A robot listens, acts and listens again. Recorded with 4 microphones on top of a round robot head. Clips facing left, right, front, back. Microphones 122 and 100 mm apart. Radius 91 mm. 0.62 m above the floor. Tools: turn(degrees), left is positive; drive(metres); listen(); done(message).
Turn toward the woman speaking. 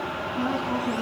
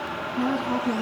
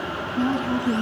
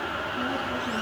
turn(degrees=-10)
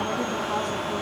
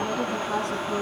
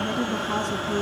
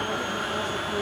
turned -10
done("Found it: a woman speaking, straight ahead, over 4 m away.")